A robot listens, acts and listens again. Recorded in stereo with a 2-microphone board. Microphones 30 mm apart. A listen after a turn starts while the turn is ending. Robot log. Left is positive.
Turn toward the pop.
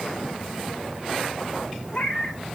cmd idle
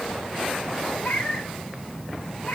cmd idle
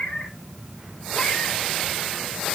end: I can't make out a pop, only a cat meowing.